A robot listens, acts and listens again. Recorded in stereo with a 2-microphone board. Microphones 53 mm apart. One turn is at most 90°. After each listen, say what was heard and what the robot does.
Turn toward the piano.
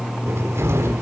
Keep listening.
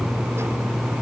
Keep listening.
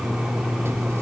I can't make out a piano, only a cupboard door.